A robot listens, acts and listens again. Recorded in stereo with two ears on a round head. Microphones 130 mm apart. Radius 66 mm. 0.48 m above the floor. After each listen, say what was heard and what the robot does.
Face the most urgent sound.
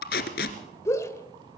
The shout: about 20° left or 160° left. Turn 20° left.
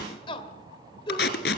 So it is at 135° left. Turn 135° left.
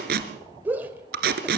The shout is now 15° right. Turn 15° right.
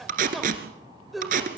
Facing the shout, 2 to 4 m away.